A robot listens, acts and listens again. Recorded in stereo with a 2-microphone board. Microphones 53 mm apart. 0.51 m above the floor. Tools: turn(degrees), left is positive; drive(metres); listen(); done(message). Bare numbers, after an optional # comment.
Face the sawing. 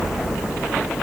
listen()
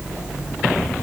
listen()
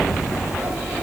done("I can't make out sawing.")